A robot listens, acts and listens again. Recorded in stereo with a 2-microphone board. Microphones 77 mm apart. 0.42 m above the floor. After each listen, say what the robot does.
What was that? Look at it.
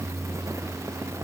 Keep listening.
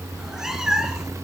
Turn 30° right.
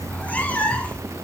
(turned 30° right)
Turn 15° left.
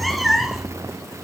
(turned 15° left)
Facing the cat meowing.